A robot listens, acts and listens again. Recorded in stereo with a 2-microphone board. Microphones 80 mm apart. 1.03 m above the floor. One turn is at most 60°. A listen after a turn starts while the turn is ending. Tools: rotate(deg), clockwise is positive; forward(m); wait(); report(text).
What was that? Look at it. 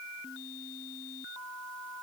wait()
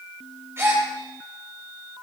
rotate(30)
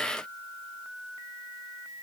wait()
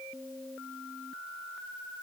report("I heard a gasp, but can't make it out now. It was about straight ahead or 120° right.")